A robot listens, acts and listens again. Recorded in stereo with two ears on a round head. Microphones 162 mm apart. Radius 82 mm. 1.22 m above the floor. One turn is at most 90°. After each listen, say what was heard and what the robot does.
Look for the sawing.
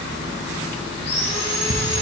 The sawing: about 30° left or 150° left. Turn 30° left.
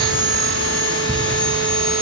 Found it: sawing, straight ahead.